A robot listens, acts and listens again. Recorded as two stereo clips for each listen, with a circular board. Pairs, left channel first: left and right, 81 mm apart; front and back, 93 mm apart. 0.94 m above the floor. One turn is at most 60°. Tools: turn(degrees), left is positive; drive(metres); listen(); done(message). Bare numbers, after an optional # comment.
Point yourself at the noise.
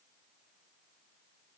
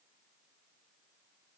listen()
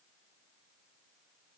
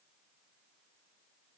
listen()
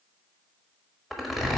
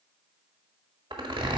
# The zipper: straight behind.
turn(60)
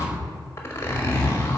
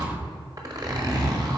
# The zipper is now 140° left.
turn(60)
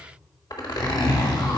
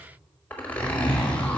# The zipper is now 70° left.
turn(60)
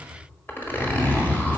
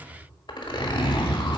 # The zipper is now 25° left.
turn(25)
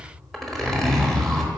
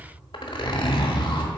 done("Facing the zipper.")